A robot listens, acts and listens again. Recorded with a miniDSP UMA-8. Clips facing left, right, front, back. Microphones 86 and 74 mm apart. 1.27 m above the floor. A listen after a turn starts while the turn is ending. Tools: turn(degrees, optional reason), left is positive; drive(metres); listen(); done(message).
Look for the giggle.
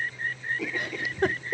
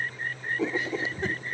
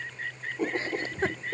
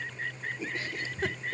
turn(degrees=60, reason="The giggle: 60° left.")
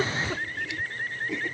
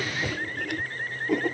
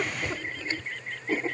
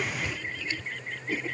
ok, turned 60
listen()
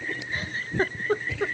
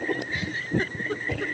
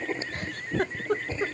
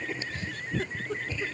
turn(degrees=35, reason="The giggle is now 35° left.")
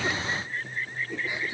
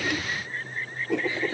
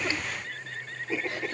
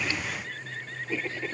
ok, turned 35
listen()
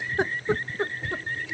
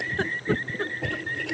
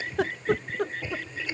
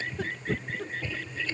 turn(degrees=15, reason="The giggle is now 15° left.")
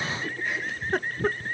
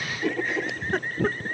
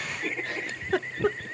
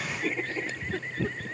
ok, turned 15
done("Found it: a giggle, straight ahead.")